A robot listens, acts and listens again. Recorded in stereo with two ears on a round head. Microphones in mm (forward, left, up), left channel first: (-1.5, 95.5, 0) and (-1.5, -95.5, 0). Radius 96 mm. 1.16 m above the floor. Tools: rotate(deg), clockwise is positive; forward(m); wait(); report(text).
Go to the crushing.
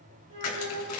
rotate(-90)
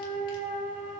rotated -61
rotate(-30)
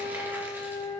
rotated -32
wait()
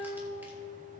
report("I heard crushing from this way, but can't make it out now. I did not reach it.")